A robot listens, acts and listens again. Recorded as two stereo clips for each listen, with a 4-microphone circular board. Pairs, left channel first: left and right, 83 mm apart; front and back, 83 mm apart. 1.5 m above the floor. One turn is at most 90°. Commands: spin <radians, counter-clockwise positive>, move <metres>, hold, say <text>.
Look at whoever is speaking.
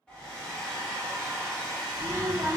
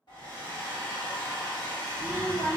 spin -0.87
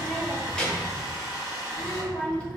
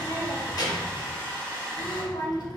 spin 0.26
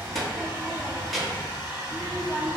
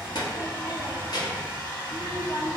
say Found it: a child speaking, straight ahead, 1 to 2 m away.